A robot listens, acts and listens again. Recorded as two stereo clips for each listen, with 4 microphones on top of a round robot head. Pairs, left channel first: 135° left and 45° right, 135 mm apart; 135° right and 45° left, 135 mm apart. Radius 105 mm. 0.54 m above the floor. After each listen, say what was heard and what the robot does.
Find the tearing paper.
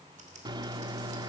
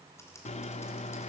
Keep listening.
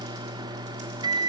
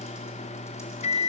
Keep listening.
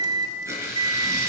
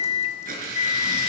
The tearing paper: 25° left. Turn 25° left.
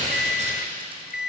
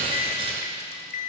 Found it: tearing paper, straight ahead, over 4 m away.